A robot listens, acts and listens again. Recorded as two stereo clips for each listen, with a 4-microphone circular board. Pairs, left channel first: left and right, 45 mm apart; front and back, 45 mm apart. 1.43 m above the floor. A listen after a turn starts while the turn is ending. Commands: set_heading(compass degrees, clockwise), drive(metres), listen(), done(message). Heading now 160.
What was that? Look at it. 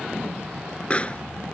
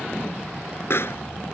set_heading(135)
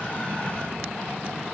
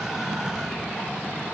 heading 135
done("I heard a pop from this way, but can't make it out now.")